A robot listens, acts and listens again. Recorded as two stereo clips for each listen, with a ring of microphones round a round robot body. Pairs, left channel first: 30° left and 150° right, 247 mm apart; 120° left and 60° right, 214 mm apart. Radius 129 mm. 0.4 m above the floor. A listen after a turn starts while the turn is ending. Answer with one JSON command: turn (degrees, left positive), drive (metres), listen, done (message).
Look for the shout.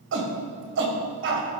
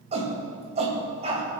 {"turn": -120}
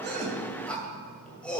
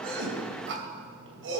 {"turn": -55}
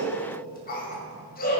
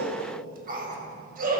{"turn": -20}
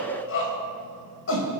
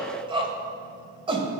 {"done": "Facing the shout."}